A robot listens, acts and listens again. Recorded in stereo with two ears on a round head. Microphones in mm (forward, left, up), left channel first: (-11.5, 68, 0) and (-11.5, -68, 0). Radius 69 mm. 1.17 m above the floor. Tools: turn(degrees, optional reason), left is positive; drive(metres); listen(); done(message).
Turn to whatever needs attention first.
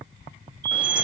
turn(degrees=-90)
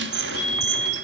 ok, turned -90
done("Found it: a fire alarm, straight ahead, over 4 m away.")